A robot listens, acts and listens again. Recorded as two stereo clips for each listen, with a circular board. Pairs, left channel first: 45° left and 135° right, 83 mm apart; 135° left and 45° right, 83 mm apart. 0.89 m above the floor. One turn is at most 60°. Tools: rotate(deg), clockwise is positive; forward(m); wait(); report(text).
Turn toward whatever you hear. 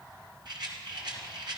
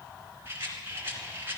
rotate(60)
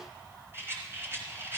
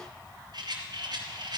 rotate(60)
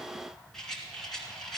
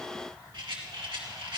rotate(40)
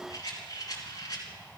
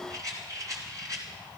report("Facing the rattle, 2 to 4 m away.")